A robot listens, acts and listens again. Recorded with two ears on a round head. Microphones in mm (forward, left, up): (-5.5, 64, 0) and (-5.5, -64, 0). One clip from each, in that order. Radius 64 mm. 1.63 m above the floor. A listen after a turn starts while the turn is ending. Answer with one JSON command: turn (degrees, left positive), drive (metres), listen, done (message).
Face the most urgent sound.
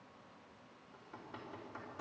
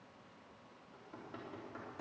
{"listen": true}
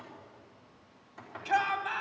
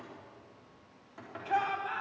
{"turn": 70}
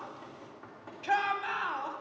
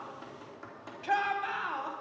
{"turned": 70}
{"turn": 10}
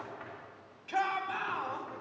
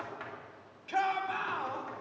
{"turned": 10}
{"done": "Found it: a shout, straight ahead, 1 to 2 m away."}